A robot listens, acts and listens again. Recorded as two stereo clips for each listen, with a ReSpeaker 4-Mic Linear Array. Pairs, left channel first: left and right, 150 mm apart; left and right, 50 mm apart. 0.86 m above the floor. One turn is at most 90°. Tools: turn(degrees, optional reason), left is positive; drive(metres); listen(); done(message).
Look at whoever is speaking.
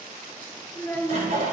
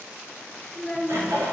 turn(degrees=15, reason="The child speaking: about 15° left or 165° left.")
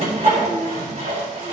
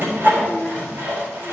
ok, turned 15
turn(degrees=90, reason="So it is at 150° left.")
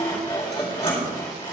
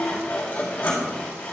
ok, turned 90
turn(degrees=60, reason="Nothing new. It was at 60° left.")
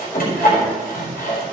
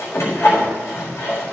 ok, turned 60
listen()
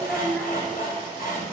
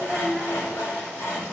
done("Found it: a child speaking, straight ahead.")